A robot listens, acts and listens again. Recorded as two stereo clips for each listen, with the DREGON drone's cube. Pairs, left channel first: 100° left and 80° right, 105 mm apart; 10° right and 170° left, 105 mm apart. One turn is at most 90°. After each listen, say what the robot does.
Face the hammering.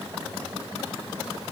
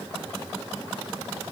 Keep listening.
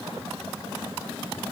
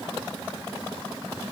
Keep listening.
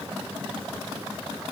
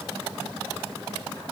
I can't make out hammering.